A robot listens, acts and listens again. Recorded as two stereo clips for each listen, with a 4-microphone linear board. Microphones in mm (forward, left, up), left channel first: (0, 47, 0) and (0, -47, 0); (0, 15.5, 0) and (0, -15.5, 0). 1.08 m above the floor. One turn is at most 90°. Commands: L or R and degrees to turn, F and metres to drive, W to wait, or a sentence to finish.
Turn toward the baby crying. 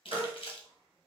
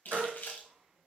R90
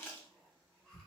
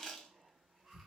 W
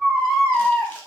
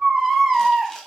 Found it: a baby crying, straight ahead, 1 to 2 m away.